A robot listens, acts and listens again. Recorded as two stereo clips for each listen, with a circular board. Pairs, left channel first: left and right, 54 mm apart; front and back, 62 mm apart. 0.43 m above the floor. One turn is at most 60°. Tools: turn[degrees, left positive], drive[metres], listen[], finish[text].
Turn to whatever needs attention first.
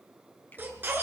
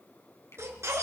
Thought: The baby crying: 140° right.
Action: turn[-60]
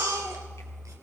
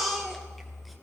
Thought: The baby crying is now 90° right.
Action: turn[-60]
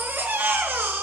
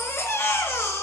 Thought: The baby crying is now 45° right.
Action: turn[-45]
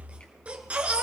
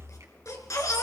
Thought: The baby crying is now 25° right.
Action: turn[-25]
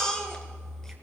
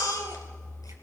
Thought: The baby crying is now 10° left.
Action: turn[10]
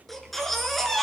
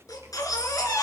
Action: finish[Facing the baby crying, 2 to 4 m away.]